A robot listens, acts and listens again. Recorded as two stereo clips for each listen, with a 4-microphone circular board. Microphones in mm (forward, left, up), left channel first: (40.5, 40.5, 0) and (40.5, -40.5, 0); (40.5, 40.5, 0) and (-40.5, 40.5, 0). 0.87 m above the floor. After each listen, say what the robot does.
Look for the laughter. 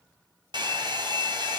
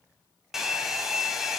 Keep listening.
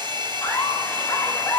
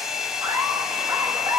Turn 155° left.
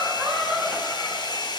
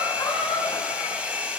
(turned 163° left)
Found it: laughter, straight ahead.